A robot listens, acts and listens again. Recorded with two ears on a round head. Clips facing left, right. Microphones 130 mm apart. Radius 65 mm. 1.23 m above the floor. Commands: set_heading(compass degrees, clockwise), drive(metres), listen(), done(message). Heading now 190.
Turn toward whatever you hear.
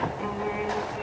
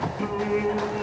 set_heading(265)
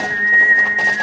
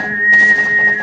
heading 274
set_heading(294)
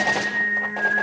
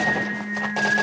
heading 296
done("Facing the singing.")